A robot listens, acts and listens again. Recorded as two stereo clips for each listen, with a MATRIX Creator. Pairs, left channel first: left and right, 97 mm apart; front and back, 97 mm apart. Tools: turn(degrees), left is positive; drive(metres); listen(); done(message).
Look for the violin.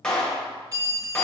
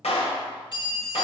listen()
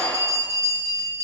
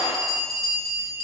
listen()
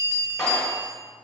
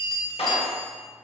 done("I can't make out a violin, only a clap and a bell.")